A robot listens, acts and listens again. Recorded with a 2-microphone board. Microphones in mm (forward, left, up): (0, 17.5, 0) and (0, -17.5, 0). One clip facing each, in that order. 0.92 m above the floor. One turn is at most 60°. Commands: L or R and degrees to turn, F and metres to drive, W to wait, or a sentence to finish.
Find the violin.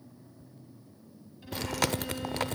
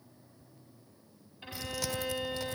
R40
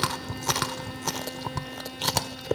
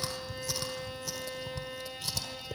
Facing the violin, over 4 m away.